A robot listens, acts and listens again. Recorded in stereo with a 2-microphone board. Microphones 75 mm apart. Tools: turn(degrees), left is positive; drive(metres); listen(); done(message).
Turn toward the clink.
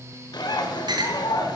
turn(degrees=-70)
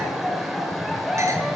listen()
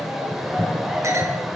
listen()
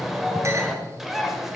done("I heard a clink, but can't make it out now. It was about straight ahead or 40° right.")